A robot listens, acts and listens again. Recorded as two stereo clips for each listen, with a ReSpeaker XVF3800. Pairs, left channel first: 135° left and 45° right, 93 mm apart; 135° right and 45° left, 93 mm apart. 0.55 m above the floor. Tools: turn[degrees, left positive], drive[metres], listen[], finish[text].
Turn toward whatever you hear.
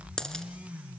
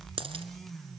Thought: The dropped coin: 50° left.
Action: turn[50]
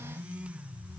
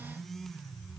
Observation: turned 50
Action: finish[Facing where the dropped coin came from. I can't hear it now.]